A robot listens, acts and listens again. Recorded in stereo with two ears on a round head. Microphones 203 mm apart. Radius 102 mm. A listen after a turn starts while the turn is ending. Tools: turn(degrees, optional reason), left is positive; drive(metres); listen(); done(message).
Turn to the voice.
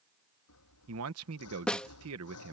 turn(degrees=-70, reason="The man speaking: about 70° right or 110° right.")
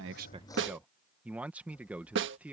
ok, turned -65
done("Facing the man speaking.")